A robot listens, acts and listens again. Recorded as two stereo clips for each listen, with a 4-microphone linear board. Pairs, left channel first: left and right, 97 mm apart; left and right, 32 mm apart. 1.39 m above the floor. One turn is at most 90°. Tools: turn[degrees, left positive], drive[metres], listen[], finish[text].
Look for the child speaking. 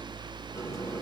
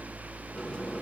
Action: listen[]
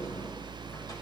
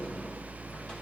Action: listen[]
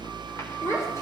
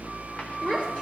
Thought: The child speaking: about 30° left or 150° left.
Action: turn[30]
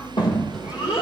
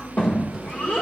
Thought: So it is at 115° left.
Action: turn[90]
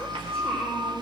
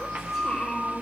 Thought: The child speaking is now 10° left.
Action: turn[10]
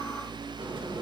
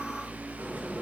Action: listen[]
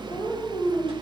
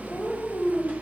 Action: finish[Facing the child speaking.]